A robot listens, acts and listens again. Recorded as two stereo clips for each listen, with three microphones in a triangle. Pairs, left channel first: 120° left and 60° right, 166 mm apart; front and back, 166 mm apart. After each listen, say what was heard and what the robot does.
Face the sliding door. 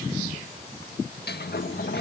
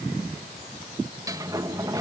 The sliding door: 110° left. Turn 110° left.
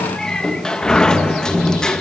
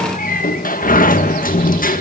The sliding door is now 35° left. Turn 35° left.
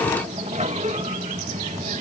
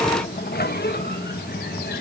The sliding door is now 15° right. Turn 15° right.
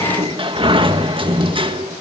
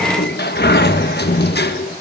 Facing the sliding door, 1 to 2 m away.